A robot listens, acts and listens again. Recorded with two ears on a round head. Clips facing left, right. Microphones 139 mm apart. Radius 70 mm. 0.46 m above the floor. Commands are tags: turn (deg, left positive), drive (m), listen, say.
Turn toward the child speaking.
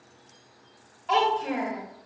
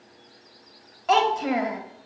<turn deg="-75"/>
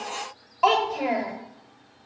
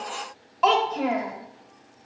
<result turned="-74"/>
<turn deg="10"/>
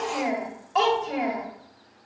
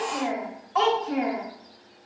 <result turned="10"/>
<turn deg="35"/>
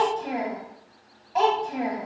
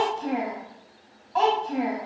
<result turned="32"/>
<turn deg="15"/>
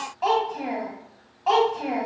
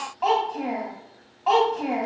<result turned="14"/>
<say>Facing the child speaking.</say>